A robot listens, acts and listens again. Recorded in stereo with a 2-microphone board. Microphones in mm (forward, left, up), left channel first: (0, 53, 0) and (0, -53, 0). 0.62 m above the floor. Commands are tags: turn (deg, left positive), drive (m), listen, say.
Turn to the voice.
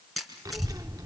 <turn deg="-35"/>
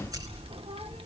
<turn deg="-110"/>
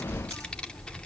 <turn deg="10"/>
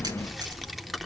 <say>Found it: a child speaking, straight ahead.</say>